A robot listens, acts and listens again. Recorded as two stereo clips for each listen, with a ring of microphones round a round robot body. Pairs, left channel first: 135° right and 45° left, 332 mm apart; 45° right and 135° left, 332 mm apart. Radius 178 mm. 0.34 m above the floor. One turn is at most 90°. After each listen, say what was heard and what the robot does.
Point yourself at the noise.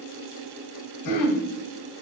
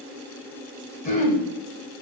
The throat clearing: 110° right. Turn 90° right.
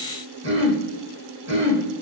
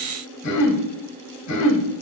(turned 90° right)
The throat clearing is now 10° right. Turn 10° right.
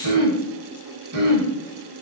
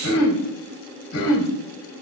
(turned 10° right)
Found it: throat clearing, straight ahead.